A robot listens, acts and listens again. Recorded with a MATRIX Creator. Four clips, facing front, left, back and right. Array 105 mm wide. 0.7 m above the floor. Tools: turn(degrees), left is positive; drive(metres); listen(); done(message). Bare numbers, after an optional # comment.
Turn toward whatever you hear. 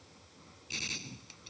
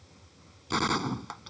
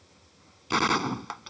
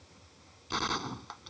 # The gunshot: 165° left.
turn(165)
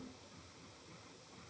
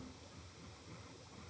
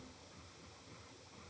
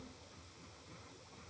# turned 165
done("I heard a gunshot from this way, but can't make it out now.")